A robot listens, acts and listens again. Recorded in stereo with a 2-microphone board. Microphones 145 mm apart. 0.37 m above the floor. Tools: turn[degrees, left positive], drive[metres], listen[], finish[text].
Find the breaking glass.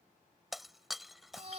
Action: turn[30]
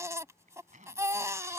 Action: listen[]
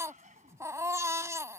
Action: finish[I heard breaking glass, but can't make it out now. It was about 30° right or 150° left.]